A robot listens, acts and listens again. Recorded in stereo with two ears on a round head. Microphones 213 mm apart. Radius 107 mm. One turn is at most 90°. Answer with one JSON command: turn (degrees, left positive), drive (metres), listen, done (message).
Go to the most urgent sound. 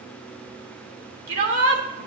{"turn": -50}
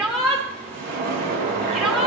{"drive": 1.0}
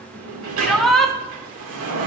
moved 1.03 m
{"drive": 1.0}
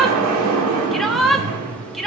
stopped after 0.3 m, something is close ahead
{"done": "I am next to the shout."}